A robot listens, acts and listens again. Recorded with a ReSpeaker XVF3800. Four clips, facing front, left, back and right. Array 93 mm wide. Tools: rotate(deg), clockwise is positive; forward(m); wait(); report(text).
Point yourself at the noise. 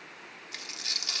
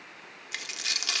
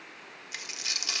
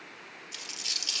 rotate(-95)
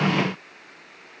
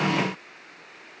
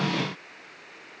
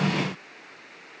report("I heard a dropped coin from this way, but can't make it out now.")